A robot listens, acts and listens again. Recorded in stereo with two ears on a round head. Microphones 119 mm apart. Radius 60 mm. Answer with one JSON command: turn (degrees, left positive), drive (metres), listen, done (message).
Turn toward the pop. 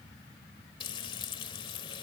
{"listen": true}
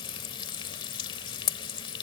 {"listen": true}
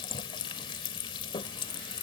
{"done": "I can't make out a pop, only frying."}